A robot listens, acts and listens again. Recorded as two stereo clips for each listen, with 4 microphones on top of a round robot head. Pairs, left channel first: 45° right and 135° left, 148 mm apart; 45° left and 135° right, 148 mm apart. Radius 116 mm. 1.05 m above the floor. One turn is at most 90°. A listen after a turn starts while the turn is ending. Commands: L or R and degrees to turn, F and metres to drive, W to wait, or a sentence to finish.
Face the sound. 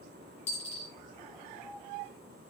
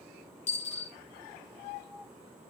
Found it: a dropped coin, straight ahead.